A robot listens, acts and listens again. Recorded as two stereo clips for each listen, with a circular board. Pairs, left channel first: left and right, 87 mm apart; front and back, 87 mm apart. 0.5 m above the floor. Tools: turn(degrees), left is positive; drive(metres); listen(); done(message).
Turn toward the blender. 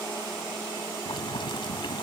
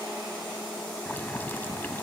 listen()
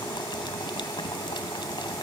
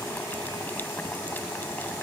listen()
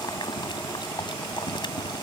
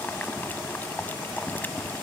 done("I can't make out a blender to turn to.")